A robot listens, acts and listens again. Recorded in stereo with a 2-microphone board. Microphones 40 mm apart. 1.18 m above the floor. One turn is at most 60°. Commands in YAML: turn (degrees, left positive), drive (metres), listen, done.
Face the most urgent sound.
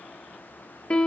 listen: true
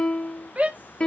turn: -40
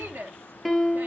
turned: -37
turn: -60
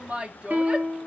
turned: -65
turn: -30
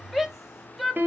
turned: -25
done: "Facing the shout."